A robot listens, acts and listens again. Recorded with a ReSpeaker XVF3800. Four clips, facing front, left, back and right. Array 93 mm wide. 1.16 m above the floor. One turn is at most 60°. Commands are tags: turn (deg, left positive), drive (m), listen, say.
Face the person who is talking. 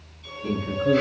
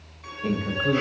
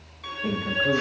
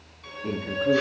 <turn deg="60"/>
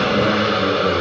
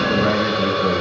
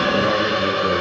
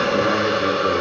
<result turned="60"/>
<turn deg="55"/>
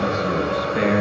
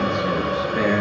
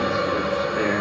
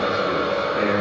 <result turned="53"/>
<say>Found it: a man speaking, straight ahead, over 4 m away.</say>